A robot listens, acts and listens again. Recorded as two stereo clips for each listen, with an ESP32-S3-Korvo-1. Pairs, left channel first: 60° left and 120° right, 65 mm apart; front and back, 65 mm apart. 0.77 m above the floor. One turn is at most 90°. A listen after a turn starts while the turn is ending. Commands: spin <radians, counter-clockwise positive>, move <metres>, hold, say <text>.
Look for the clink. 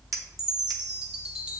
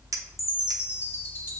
spin -1.57
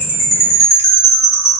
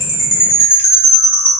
spin -1.05
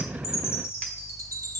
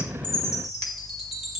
spin -0.17
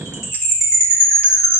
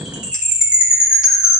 hold
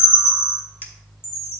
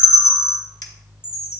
say Facing the clink, under 1 m away.